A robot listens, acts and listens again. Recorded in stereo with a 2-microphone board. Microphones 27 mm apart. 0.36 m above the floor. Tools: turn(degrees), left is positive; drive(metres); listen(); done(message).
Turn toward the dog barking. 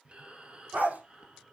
turn(degrees=-90)
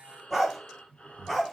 done("Found it: a dog barking, straight ahead, 2 to 4 m away.")